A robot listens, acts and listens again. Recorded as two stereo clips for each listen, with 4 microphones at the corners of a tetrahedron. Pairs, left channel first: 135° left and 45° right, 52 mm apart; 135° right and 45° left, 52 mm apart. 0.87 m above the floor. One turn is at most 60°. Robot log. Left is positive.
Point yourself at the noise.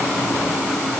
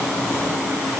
cmd idle
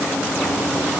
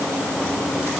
cmd idle
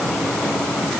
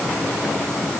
end: I can't make out anything.